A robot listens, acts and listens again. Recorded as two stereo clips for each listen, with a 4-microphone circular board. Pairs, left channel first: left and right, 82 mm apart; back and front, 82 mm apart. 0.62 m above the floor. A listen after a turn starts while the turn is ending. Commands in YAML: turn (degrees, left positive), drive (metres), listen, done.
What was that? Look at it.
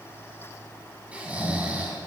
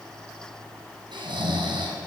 turn: -15
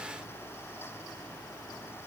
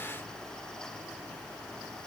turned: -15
listen: true
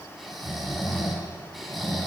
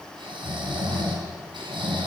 done: "Found it: snoring, straight ahead."